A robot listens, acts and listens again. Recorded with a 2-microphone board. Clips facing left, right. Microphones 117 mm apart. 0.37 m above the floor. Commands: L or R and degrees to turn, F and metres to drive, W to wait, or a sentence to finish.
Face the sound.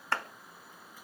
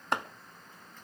R20
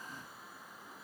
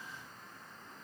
W
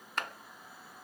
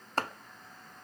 R140
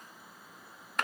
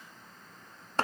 R35
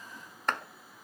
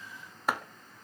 R10
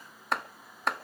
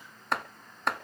Found it: chopping, straight ahead.